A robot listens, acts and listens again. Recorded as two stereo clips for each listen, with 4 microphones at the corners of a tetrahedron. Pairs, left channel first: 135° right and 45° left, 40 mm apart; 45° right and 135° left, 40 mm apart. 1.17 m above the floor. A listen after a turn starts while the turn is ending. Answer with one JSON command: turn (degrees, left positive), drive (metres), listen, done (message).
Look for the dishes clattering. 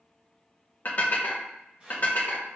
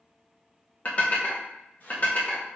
{"turn": -95}
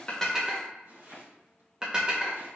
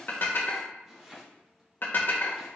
{"turn": -20}
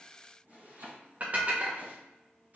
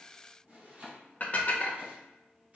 {"done": "Facing the dishes clattering, under 1 m away."}